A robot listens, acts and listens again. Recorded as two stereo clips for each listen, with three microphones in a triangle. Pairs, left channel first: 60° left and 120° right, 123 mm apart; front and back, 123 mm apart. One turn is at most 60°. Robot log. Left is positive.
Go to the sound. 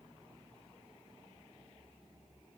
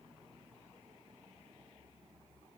cmd idle
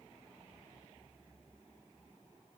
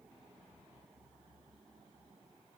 cmd idle
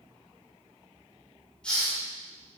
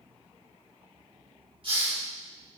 note: The hiss: 140° left.
cmd yaw +60
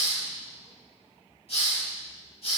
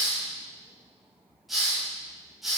note: The hiss is now 90° left.
cmd yaw +60
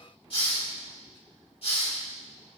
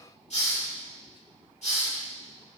note: The hiss is now 20° left.
cmd yaw +20
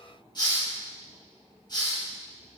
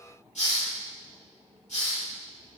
cmd fwd 1.0
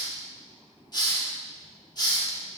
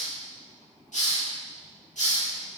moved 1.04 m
cmd fwd 1.0
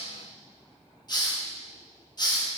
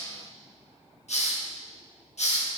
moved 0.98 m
cmd fwd 1.0
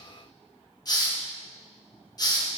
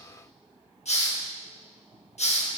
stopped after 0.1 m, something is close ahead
end: I am next to the hiss.